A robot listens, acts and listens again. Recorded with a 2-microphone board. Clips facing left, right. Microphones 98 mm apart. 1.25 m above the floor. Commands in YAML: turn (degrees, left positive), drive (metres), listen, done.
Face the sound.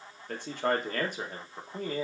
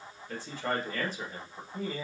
turn: 55
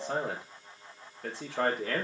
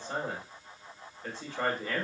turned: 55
turn: 70
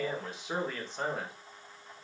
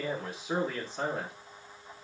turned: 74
done: "Found it: a man speaking, straight ahead."